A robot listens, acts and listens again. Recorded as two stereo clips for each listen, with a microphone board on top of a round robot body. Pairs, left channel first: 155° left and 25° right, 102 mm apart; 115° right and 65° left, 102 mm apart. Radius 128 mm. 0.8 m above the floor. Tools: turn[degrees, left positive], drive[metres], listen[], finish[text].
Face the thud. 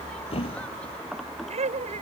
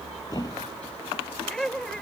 Thought: The thud: 165° right.
Action: turn[-165]
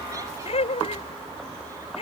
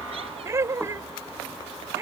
Action: finish[Facing where the thud came from. I can't hear it now.]